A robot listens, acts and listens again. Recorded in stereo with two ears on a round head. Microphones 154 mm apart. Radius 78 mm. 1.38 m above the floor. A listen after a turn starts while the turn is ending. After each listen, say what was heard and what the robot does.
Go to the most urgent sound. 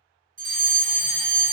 The fire alarm: about 50° right or 130° right. Turn 50° right.
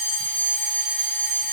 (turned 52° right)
So it is at 10° right. Turn 10° right.
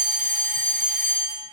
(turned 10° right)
Drive 1.0 m forward.
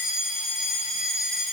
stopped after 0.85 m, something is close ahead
I am next to the fire alarm.